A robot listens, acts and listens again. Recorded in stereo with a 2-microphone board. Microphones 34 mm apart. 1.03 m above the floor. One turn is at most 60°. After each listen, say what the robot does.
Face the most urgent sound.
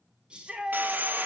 Turn 30° right.
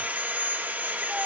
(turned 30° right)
Keep listening.
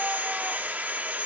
Keep listening.
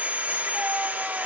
I heard a shout, but can't make it out now. It was about straight ahead or 120° right.